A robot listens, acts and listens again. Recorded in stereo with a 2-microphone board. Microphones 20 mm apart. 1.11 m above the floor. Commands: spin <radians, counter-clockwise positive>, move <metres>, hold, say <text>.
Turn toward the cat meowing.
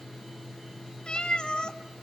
spin 0.79
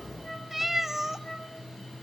spin -0.35
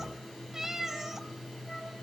spin -0.52
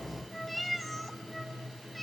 say Found it: a cat meowing, straight ahead.